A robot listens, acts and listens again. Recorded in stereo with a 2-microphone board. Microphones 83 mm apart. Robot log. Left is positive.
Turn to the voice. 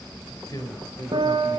note: The man speaking: about 45° left or 135° left.
cmd yaw +45
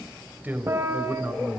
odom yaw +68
note: So it is at 20° right.
cmd yaw -20
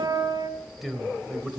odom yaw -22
end: Facing the man speaking.